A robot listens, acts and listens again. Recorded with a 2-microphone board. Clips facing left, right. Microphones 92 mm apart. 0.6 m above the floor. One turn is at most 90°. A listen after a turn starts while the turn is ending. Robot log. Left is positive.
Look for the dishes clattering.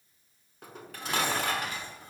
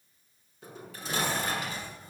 note: The dishes clattering: about 65° left or 115° left.
cmd yaw +65
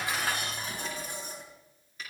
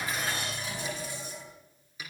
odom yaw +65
note: So it is at 50° left.
cmd yaw +50
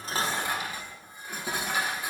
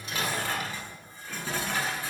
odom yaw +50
note: The dishes clattering is now 15° left.
cmd yaw +15
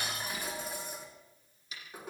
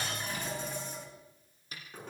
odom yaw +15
note: The dishes clattering is now 10° left.
cmd yaw +10
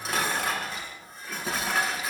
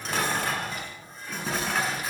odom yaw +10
end: Facing the dishes clattering, over 4 m away.